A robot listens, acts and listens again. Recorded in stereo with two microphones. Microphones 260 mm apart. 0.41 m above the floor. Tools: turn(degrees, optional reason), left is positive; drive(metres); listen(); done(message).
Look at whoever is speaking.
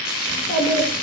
turn(degrees=45, reason="The child speaking: about 45° left or 135° left.")
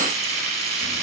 listen()
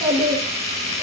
done("Facing the child speaking, 2 to 4 m away.")